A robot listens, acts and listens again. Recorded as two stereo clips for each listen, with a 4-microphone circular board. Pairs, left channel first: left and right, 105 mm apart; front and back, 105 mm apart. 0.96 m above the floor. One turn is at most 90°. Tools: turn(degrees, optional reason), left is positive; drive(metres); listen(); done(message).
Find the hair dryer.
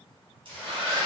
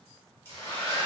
turn(degrees=-65, reason="The hair dryer: 65° right.")
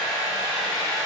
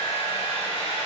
done("Facing the hair dryer.")